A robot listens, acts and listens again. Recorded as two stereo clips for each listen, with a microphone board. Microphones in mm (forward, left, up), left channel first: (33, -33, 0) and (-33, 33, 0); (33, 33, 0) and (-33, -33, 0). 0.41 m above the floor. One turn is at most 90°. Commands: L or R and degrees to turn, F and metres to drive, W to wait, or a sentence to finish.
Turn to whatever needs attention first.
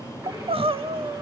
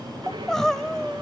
L90
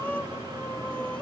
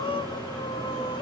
L30
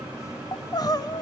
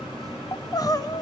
Found it: crying, straight ahead.